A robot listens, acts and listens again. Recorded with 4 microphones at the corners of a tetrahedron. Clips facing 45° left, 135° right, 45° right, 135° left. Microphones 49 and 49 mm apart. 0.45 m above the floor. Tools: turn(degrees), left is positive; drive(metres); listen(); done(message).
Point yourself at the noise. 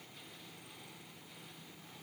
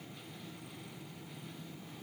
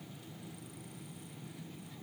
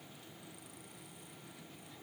listen()
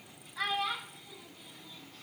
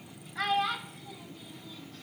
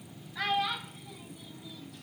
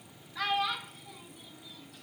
turn(degrees=-135)
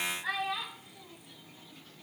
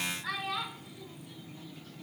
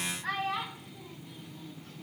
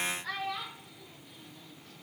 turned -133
turn(degrees=-15)
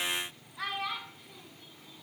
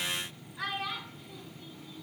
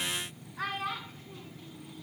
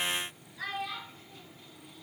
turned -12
turn(degrees=-15)
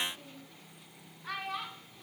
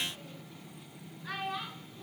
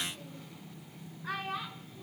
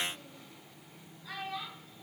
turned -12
done("Found it: a child speaking, straight ahead, 2 to 4 m away.")